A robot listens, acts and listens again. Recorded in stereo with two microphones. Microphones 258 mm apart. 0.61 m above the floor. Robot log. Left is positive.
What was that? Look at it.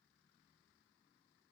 cmd idle
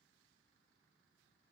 cmd idle
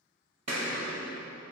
cmd yaw -90
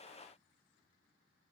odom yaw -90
end: Facing where the explosion came from. I can't hear it now.